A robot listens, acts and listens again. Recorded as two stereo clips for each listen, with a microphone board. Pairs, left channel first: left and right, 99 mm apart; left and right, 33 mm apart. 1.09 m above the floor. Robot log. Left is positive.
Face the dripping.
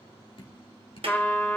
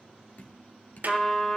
note: The dripping: about 60° left or 120° left.
cmd yaw +60
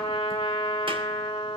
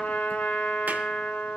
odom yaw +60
cmd idle
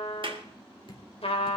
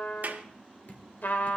note: So it is at 60° left.
cmd yaw +60
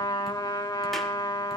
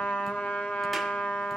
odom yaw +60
cmd idle
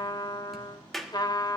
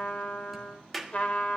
cmd idle
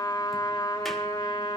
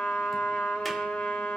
end: Facing where the dripping came from. I can't hear it now.